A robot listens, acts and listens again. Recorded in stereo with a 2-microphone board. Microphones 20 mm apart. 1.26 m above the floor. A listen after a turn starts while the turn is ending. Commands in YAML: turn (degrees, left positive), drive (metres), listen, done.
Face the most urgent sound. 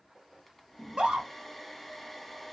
turn: -55
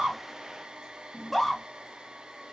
done: "Found it: a scream, straight ahead, 1 to 2 m away."